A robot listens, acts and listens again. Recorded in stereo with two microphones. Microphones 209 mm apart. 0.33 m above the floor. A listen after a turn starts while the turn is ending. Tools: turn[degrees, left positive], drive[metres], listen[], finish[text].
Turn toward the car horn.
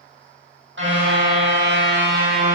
Thought: The car horn: about 70° right or 110° right.
Action: turn[-70]
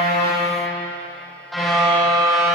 Action: finish[Facing the car horn.]